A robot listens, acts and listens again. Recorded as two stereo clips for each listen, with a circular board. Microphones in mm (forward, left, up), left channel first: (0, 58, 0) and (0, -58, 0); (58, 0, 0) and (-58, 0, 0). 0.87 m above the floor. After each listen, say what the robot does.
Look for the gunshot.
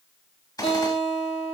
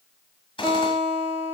Turn 35° left.
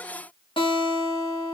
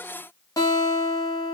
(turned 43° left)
Turn 10° right.
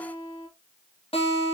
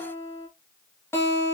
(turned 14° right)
I heard a gunshot from this way, but can't make it out now.